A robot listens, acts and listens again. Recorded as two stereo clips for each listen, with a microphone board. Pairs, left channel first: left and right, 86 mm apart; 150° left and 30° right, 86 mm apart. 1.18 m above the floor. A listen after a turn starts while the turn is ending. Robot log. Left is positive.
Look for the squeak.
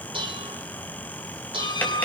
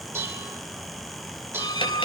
note: The squeak: 115° left.
cmd yaw +115
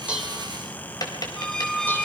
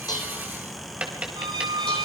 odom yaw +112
end: Found it: a squeak, straight ahead, 1 to 2 m away.